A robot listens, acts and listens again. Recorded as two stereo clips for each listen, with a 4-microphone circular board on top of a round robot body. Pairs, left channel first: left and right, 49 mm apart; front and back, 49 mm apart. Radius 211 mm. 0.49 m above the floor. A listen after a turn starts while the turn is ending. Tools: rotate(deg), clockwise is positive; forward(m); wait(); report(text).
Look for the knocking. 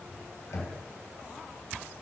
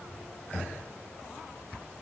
rotate(-65)
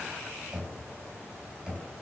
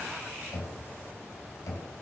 rotate(15)
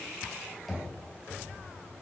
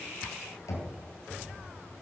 report("Found it: knocking, straight ahead.")